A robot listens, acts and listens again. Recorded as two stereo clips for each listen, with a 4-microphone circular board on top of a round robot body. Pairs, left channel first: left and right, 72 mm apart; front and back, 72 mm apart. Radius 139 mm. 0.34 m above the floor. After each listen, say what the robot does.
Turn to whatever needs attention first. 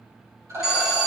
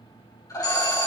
Facing the alarm, over 4 m away.